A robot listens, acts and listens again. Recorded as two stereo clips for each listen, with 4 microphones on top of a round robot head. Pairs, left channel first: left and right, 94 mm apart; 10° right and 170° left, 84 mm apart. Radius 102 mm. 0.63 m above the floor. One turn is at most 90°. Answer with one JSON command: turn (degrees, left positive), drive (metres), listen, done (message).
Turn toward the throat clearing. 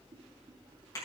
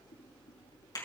{"listen": true}
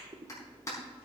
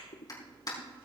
{"listen": true}
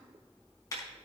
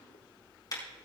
{"done": "I can't make out throat clearing to turn to."}